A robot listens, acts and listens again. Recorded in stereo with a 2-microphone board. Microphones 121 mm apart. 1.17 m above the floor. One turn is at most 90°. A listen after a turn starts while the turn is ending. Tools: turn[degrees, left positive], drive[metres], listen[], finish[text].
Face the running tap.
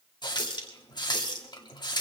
Thought: The running tap: about 35° left or 145° left.
Action: turn[35]
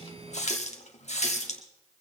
Thought: So it is at 110° left.
Action: turn[90]
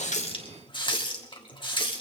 Thought: The running tap is now 45° left.
Action: turn[45]
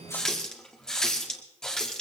Action: finish[Facing the running tap, 1 to 2 m away.]